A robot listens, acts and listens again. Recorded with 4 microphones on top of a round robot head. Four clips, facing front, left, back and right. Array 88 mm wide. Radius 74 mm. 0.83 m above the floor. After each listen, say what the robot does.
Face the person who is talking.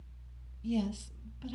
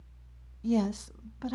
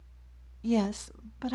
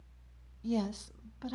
Turn 170° left.
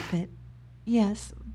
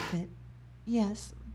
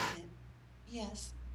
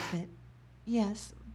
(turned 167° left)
Found it: a woman speaking, straight ahead, under 1 m away.